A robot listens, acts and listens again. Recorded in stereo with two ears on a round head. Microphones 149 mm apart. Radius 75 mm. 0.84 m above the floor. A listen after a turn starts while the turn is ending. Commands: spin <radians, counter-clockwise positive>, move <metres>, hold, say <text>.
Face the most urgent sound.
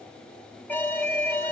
spin 0.52
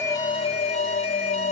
spin 2.36
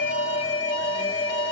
spin 0.52
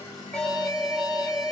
say Found it: an alarm, straight ahead.